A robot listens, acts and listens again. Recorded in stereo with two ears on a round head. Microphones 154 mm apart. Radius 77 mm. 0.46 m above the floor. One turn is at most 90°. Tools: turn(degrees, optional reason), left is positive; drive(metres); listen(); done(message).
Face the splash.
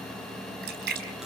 turn(degrees=-65, reason="The splash: about 65° right or 115° right.")
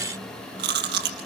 listen()
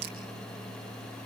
done("I heard a splash, but can't make it out now. It was about straight ahead or 50° right.")